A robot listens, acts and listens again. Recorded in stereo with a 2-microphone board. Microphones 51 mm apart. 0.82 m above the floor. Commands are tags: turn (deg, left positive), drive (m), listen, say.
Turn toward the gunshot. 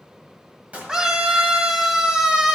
<turn deg="-30"/>
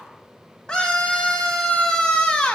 <listen/>
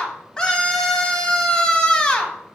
<say>I heard a gunshot, but can't make it out now. It was about straight ahead or 120° right.</say>